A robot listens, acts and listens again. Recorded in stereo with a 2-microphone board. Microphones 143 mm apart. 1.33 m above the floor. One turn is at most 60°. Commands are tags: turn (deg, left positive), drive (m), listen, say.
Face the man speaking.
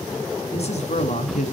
<turn deg="60"/>
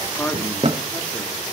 <turn deg="10"/>
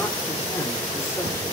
<listen/>
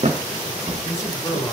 <turn deg="25"/>
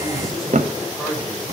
<say>Facing the man speaking.</say>